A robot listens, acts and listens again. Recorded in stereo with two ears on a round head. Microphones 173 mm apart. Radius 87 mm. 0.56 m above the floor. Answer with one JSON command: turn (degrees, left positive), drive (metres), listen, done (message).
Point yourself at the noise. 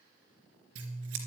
{"turn": -90}
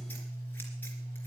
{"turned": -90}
{"turn": 10}
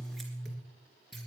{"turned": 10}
{"done": "Found it: scissors, straight ahead, 2 to 4 m away."}